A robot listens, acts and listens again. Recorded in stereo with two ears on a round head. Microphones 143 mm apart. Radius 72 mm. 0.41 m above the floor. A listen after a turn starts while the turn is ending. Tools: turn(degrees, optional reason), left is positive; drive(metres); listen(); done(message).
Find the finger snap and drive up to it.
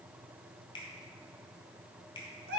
turn(degrees=30, reason="The finger snap: about 30° left or 150° left.")
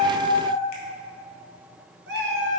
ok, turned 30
listen()
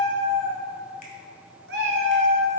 listen()
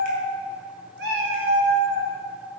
done("I heard a finger snap, but can't make it out now. It was about straight ahead or 120° left. I did not reach it.")